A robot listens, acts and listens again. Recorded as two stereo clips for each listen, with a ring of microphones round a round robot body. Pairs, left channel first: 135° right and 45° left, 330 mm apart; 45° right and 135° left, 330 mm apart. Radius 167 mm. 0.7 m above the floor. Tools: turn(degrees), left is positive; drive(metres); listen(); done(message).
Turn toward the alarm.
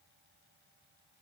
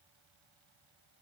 listen()
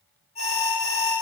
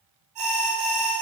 turn(degrees=155)
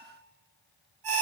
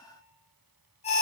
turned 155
turn(degrees=25)
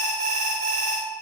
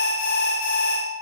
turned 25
turn(degrees=15)
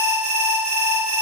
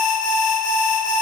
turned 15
done("Found it: an alarm, straight ahead.")